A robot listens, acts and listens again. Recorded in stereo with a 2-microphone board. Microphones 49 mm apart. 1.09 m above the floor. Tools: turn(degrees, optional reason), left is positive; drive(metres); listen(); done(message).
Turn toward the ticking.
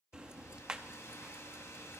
turn(degrees=-15, reason="The ticking: about 15° right or 165° right.")
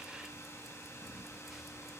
done("Facing the ticking, under 1 m away.")